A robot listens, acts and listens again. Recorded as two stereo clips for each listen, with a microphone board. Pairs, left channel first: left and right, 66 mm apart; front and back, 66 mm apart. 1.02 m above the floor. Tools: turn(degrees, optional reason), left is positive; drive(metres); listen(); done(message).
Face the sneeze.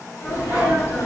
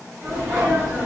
turn(degrees=125, reason="The sneeze: 125° left.")
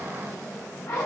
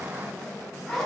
done("Facing where the sneeze came from. I can't hear it now.")